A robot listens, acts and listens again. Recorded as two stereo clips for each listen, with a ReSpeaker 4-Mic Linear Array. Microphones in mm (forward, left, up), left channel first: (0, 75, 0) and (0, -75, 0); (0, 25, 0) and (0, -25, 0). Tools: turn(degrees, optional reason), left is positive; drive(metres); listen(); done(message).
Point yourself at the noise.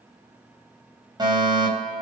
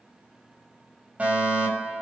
turn(degrees=-30, reason="The fire alarm: about 30° right or 150° right.")
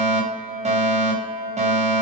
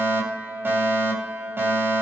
turn(degrees=-115, reason="So it is at 115° right.")
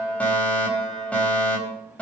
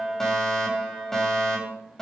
turn(degrees=10, reason="The fire alarm is now 10° left.")
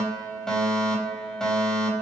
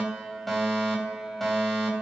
done("Facing the fire alarm, 2 to 4 m away.")